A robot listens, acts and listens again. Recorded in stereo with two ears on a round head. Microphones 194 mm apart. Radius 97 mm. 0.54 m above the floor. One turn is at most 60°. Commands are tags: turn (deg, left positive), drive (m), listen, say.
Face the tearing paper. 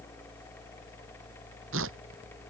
<turn deg="-60"/>
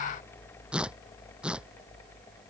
<say>Found it: tearing paper, straight ahead.</say>